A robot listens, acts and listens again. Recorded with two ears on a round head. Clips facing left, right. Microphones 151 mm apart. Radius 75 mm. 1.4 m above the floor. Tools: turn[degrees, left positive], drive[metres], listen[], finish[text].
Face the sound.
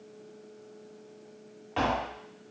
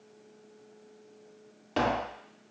Thought: The tapping: about 50° right or 130° right.
Action: turn[-50]
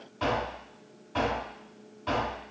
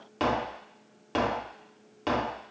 Thought: So it is at 85° right.
Action: turn[-85]
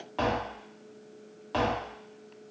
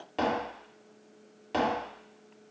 Thought: The tapping is now 20° right.
Action: turn[-20]
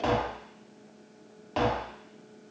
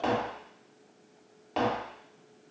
Action: finish[Facing the tapping, 1 to 2 m away.]